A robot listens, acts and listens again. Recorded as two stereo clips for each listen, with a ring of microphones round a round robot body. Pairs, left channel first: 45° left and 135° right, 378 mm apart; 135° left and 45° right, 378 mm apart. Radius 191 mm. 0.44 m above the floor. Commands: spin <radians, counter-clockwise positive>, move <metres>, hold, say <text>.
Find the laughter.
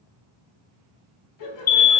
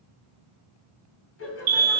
spin 1.40
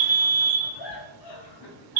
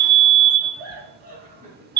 spin 0.44
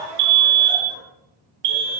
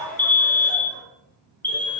say Found it: laughter, straight ahead.